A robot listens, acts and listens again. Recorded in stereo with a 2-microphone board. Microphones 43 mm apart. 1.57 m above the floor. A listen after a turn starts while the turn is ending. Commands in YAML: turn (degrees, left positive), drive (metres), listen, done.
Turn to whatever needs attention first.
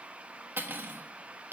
listen: true
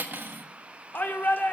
turn: 45
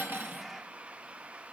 listen: true
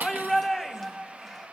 done: "Facing the shout, 1 to 2 m away."